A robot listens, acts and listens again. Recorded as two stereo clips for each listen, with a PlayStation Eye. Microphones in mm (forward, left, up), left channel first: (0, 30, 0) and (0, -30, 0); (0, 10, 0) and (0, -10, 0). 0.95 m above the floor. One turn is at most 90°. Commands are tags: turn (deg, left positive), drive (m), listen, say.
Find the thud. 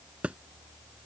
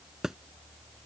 <turn deg="-20"/>
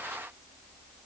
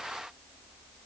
<listen/>
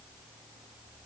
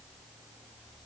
<say>I heard a thud, but can't make it out now. It was about straight ahead or 140° right.</say>